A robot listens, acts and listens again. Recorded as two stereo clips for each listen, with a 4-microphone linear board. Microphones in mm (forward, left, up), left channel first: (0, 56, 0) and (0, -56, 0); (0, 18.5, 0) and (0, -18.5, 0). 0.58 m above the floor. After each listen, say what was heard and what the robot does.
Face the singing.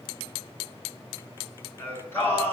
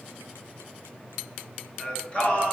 The singing: about 20° left or 160° left. Turn 20° left.
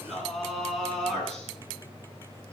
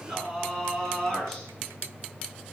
Turn 30° left.
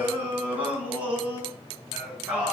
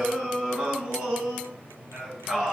So it is at 10° right. Turn 10° right.
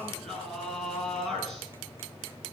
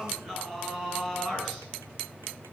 Facing the singing, over 4 m away.